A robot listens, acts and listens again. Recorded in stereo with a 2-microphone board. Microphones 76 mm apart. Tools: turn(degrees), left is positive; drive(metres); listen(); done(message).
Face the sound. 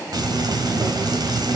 turn(degrees=-65)
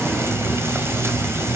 turn(degrees=-40)
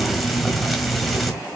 done("Facing the frying.")